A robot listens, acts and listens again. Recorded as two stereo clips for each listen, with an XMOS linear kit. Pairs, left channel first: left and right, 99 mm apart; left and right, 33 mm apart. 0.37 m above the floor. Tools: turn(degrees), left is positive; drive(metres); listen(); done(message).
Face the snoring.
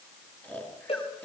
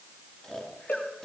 turn(degrees=20)
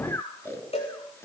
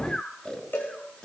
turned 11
turn(degrees=150)
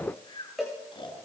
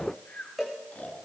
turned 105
turn(degrees=45)
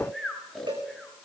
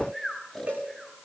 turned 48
done("Facing the snoring.")